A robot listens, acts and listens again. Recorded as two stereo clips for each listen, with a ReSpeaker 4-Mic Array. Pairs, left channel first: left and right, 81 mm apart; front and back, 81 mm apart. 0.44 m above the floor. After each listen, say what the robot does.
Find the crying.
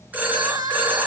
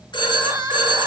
Turn 135° right.
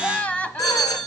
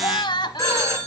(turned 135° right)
Turn 15° left.
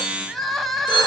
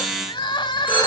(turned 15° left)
Found it: crying, straight ahead.